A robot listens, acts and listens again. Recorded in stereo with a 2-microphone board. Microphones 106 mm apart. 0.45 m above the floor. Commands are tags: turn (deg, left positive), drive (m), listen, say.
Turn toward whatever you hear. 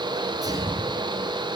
<turn deg="-35"/>
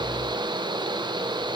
<listen/>
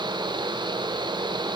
<say>I heard a sneeze, but can't make it out now. It was about straight ahead or 110° right.</say>